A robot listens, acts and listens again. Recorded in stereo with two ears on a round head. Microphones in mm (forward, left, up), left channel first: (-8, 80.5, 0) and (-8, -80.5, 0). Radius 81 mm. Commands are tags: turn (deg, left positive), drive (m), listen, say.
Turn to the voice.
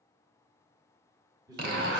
<turn deg="-20"/>
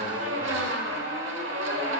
<listen/>
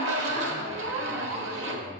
<listen/>
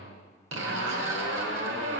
<say>I heard a man speaking, but can't make it out now. It was about straight ahead or 140° right.</say>